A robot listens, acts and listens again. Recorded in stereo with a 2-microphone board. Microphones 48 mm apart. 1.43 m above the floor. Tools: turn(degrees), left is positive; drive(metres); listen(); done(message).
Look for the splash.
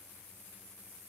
listen()
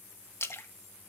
turn(degrees=60)
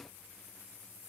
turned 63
listen()
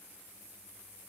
done("I heard a splash, but can't make it out now. It was about straight ahead or 55° left.")